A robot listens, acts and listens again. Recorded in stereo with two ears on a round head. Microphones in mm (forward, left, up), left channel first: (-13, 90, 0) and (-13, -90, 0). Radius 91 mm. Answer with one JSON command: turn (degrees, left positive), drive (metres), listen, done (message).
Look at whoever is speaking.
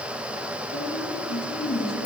{"turn": 55}
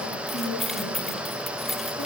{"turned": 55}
{"turn": 70}
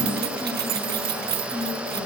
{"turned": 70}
{"turn": 10}
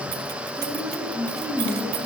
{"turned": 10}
{"turn": 10}
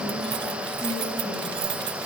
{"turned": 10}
{"listen": true}
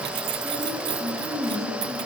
{"done": "Facing the woman speaking."}